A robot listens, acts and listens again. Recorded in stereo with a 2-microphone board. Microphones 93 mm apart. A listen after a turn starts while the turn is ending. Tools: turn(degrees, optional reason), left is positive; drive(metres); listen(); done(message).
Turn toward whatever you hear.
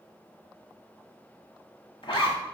turn(degrees=65, reason="The zipper: about 65° left or 115° left.")
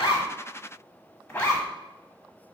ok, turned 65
turn(degrees=15, reason="So it is at 15° left.")
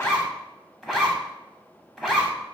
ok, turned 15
done("Facing the zipper.")